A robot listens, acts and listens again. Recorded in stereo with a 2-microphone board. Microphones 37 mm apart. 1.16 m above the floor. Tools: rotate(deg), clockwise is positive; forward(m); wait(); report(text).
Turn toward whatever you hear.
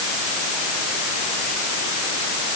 wait()
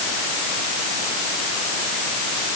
wait()
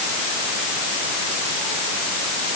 report("I can't make out anything to turn to.")